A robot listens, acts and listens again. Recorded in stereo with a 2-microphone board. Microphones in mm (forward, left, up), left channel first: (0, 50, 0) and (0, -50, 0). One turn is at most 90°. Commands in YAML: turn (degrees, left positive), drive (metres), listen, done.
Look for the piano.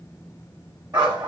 listen: true
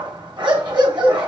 listen: true
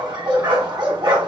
done: "I can't make out a piano, only a dog barking."